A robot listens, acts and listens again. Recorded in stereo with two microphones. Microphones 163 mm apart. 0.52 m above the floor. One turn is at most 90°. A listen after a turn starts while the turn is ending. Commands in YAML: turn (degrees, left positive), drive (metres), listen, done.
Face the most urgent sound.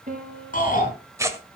turn: 55
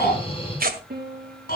turn: 70
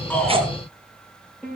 listen: true
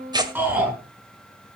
turn: -10
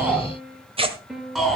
done: "Found it: a shout, straight ahead."